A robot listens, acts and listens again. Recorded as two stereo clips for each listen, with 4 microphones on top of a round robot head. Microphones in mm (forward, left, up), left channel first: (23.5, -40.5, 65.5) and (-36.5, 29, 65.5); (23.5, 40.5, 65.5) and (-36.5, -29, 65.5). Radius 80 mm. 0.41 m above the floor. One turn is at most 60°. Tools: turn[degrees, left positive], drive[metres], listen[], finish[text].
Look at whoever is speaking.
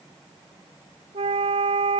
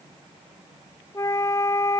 Action: listen[]
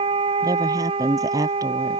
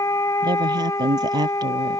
Thought: The woman speaking: 175° right.
Action: turn[-60]
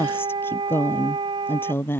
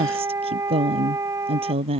Thought: The woman speaking is now 115° right.
Action: turn[-60]
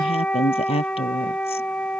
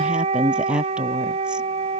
Thought: The woman speaking is now 50° right.
Action: turn[-50]
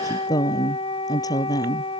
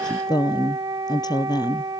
Action: finish[Facing the woman speaking.]